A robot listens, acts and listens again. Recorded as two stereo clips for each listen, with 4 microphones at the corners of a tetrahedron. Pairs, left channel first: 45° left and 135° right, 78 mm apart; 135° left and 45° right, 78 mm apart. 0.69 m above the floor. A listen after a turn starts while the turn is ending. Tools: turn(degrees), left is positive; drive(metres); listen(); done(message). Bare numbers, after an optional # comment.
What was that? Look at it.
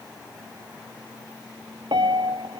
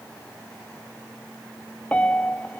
# The piano: 150° right.
turn(-150)
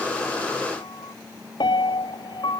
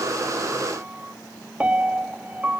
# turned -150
# The piano is now 30° left.
turn(30)
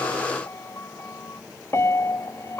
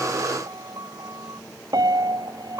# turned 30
# The piano is now 10° right.
turn(-10)
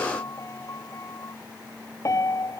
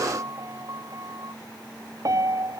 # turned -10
done("Facing the piano.")